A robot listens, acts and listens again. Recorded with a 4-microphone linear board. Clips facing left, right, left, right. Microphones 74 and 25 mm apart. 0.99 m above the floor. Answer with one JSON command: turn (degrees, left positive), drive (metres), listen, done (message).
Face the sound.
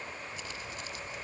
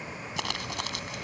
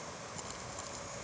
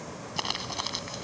{"turn": -90}
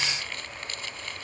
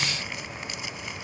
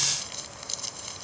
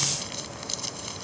{"turn": -10}
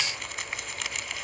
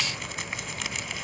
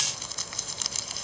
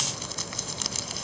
{"done": "Found it: crumpling, straight ahead."}